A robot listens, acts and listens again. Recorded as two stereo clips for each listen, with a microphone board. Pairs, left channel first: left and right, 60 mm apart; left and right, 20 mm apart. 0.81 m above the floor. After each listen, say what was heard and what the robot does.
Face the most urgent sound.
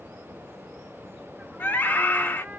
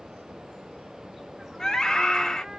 The scream: about 35° left or 145° left. Turn 35° left.
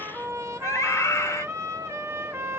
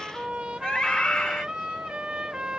So it is at 105° left. Turn 105° left.
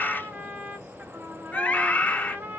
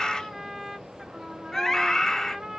The scream is now 30° left. Turn 30° left.
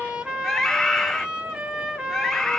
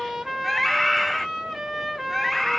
The scream is now 10° left. Turn 10° left.
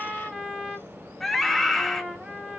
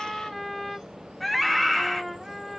Found it: a scream, straight ahead.